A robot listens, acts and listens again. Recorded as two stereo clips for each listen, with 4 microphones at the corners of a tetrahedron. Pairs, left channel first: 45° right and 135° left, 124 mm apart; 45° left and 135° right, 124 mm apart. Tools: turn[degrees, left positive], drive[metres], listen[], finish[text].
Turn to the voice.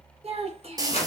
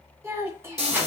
Thought: The child speaking: 155° left.
Action: turn[155]
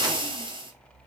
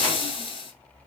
Action: listen[]
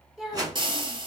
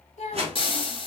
Thought: The child speaking is now 50° left.
Action: turn[50]
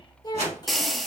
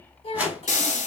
Action: finish[Found it: a child speaking, straight ahead, 1 to 2 m away.]